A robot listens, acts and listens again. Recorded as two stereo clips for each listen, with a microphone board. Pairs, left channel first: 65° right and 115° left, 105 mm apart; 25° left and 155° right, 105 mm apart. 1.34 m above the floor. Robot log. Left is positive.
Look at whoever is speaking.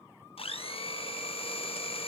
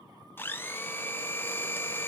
cmd idle
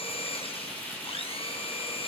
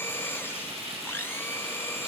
cmd idle
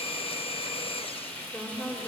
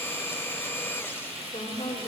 end: Facing the woman speaking.